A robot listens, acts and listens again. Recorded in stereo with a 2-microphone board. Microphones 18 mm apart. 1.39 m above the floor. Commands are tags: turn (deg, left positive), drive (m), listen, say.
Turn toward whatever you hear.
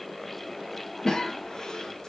<turn deg="40"/>
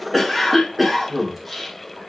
<say>Found it: a cough, straight ahead, 2 to 4 m away.</say>